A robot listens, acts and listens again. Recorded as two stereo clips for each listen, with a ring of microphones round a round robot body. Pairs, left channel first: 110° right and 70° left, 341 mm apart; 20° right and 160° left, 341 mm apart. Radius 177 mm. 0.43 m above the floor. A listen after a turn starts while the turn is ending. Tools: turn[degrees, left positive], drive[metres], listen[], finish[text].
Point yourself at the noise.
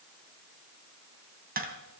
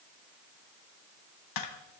Action: finish[Facing the tapping, 2 to 4 m away.]